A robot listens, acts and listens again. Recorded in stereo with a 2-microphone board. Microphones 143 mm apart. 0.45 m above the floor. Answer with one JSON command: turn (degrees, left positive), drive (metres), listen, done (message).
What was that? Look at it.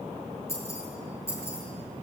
{"turn": 20}
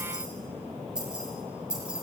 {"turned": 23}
{"done": "Found it: keys jangling, straight ahead, over 4 m away."}